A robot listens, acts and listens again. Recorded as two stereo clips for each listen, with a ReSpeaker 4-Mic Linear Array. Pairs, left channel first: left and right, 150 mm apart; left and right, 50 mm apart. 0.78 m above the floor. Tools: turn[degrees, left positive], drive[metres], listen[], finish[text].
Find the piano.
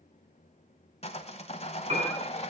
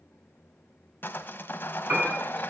Thought: The piano: about 45° right or 135° right.
Action: turn[-45]
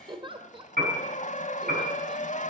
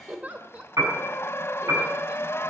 Thought: So it is at 90° right.
Action: turn[-90]
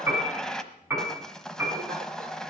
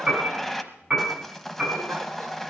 Thought: The piano is now 15° right.
Action: turn[-15]
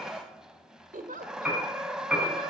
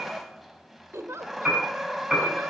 Action: finish[Found it: a piano, straight ahead.]